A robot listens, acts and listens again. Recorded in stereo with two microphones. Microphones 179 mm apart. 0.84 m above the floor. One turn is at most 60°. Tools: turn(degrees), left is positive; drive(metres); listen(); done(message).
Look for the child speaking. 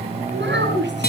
turn(degrees=-60)
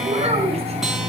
turn(degrees=-35)
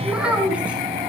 done("Found it: a child speaking, straight ahead, over 4 m away.")